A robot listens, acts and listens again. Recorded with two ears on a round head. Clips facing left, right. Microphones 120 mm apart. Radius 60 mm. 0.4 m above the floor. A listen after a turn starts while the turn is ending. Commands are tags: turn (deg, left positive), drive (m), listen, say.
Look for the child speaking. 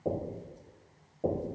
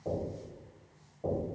<listen/>
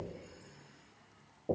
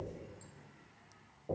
<listen/>
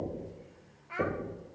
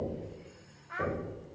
<turn deg="30"/>
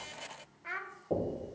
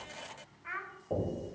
<turn deg="135"/>
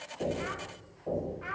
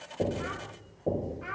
<say>Facing the child speaking, under 1 m away.</say>